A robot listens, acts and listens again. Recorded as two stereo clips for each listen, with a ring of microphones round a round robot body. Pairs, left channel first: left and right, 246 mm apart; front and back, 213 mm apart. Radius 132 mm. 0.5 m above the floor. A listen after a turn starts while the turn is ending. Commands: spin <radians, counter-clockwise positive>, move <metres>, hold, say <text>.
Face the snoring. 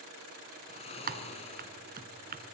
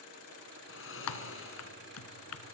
spin 0.44
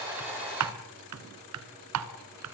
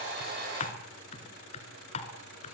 hold
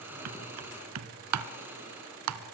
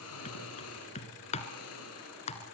spin -0.17
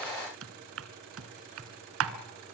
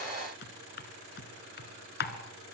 hold
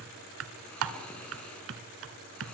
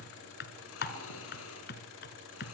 say Facing the snoring.